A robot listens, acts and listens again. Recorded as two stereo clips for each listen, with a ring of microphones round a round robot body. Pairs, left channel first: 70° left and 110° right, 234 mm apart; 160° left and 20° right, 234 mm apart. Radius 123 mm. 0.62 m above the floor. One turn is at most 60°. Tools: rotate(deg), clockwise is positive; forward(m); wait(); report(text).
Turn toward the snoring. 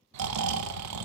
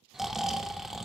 rotate(60)
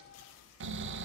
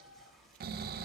rotate(60)
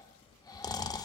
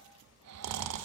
report("Facing the snoring.")